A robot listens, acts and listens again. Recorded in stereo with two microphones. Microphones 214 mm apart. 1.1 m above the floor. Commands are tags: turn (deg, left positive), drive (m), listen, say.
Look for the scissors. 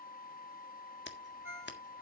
<turn deg="60"/>
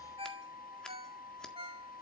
<listen/>
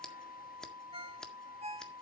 <say>Found it: scissors, straight ahead.</say>